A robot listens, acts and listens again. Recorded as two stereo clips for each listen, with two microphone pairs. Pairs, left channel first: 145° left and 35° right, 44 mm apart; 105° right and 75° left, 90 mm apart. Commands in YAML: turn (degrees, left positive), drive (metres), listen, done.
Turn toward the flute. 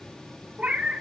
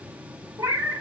listen: true
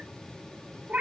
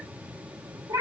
listen: true
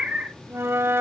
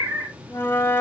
turn: -40
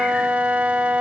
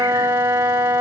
turn: 20
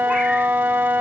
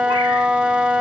done: "Facing the flute, under 1 m away."